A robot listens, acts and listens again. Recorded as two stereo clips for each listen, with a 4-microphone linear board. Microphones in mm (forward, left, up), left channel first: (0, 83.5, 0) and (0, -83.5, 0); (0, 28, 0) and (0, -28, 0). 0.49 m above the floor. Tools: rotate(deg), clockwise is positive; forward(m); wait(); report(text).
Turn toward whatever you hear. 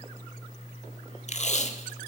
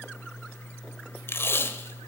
rotate(-45)
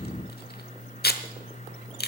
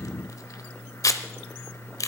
rotate(-90)
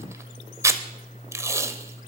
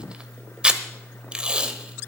rotate(15)
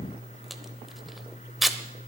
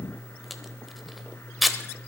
report("Found it: tape being pulled, straight ahead.")